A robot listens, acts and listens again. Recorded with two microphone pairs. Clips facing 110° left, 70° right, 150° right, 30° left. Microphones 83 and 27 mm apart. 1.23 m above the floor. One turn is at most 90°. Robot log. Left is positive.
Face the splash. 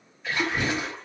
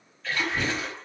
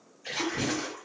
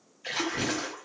note: The splash: 45° left.
cmd yaw +45
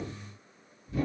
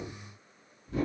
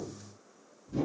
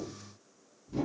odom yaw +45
end: Facing where the splash came from. I can't hear it now.